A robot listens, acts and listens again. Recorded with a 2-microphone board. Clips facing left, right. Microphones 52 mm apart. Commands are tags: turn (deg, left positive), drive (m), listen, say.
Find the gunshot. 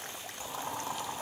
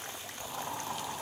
<listen/>
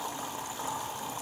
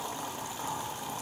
<listen/>
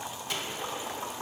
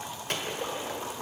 <turn deg="-55"/>
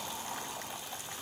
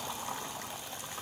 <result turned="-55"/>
<listen/>
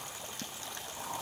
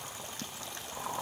<say>I heard a gunshot, but can't make it out now. It was about straight ahead or 70° right.</say>